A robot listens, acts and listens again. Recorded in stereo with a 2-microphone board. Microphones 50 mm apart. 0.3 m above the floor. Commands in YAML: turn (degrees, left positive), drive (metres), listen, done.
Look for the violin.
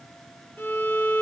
turn: 45
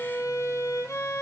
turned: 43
turn: 90
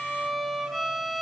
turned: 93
done: "Facing the violin, 2 to 4 m away."